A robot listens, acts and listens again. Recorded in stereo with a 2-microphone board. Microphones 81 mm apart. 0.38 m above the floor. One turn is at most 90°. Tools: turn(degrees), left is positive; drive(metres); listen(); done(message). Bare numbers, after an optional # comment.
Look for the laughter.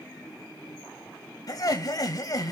# The laughter: about 50° left or 130° left.
turn(50)
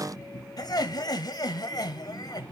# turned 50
# So it is at 70° left.
turn(70)
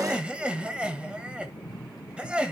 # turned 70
# The laughter is now 15° right.
turn(-15)
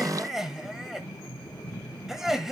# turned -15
done("Facing the laughter, 1 to 2 m away.")